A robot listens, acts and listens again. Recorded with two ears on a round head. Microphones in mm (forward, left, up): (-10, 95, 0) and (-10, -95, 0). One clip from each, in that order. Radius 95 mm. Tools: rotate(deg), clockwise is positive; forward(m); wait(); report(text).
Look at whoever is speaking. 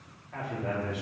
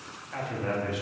rotate(55)
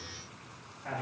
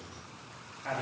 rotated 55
rotate(25)
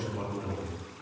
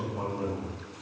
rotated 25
report("Found it: a man speaking, straight ahead.")